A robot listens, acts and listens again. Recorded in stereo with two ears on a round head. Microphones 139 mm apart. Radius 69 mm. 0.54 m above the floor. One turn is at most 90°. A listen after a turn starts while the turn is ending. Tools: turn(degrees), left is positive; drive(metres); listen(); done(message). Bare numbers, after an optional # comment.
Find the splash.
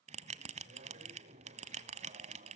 listen()
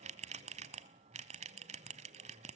listen()
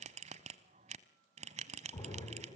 # The splash: about 25° left or 155° left.
turn(25)
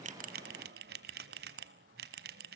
listen()
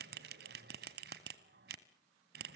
done("I heard a splash, but can't make it out now. It was about straight ahead or 130° left.")